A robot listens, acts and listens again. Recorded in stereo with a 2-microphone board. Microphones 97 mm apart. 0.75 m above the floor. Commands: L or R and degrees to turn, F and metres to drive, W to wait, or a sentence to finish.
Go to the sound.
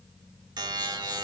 R50
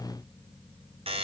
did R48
R85
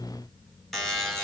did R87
F1.0
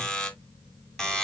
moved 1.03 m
F1.0
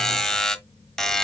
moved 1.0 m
F1.0
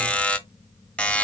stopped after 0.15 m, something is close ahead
L15
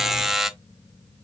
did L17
I am next to the buzzer.